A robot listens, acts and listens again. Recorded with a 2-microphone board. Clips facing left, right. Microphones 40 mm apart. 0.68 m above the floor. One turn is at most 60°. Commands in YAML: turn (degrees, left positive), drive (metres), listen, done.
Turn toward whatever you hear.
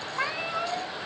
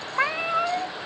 turn: -30
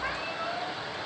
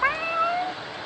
turn: -60
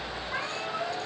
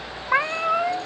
turn: -60
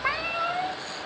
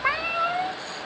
turn: -10
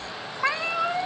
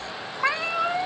done: "Found it: a cat meowing, straight ahead, under 1 m away."